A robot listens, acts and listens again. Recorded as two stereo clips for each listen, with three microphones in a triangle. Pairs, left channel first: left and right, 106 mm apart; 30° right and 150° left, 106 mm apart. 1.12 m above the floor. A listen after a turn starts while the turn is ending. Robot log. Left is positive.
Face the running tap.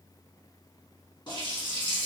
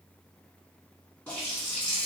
note: The running tap: 40° left.
cmd yaw +40
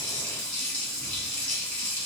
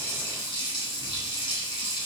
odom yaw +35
note: The running tap is now 10° left.
cmd yaw +10
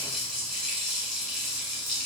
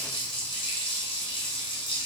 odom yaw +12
end: Facing the running tap, 1 to 2 m away.